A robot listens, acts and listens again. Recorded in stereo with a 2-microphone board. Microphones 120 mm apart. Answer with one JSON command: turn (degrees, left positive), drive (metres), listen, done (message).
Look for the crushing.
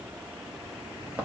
{"listen": true}
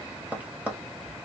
{"listen": true}
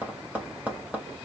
{"done": "I can't make out crushing, only tapping."}